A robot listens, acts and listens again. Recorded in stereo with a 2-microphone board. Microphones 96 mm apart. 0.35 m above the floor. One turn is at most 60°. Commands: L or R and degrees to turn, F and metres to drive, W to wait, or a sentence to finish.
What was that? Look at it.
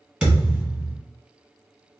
R30
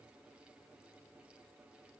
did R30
W
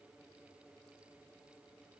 I heard a thud, but can't make it out now. It was about 20° left or 140° right.